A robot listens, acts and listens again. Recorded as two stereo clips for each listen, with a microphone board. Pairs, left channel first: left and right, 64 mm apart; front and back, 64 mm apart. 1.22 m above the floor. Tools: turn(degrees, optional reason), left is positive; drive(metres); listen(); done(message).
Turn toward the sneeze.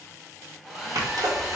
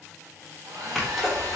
turn(degrees=-95, reason="The sneeze: 95° right.")
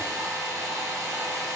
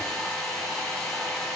done("Facing where the sneeze came from. I can't hear it now.")